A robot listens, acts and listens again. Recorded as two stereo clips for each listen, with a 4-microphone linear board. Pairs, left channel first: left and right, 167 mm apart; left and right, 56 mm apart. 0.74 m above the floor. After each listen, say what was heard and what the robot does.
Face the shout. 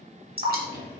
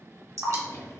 Keep listening.
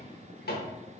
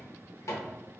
Keep listening.
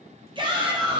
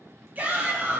The shout: about 30° right or 150° right. Turn 30° right.
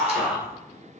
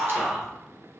Facing the shout.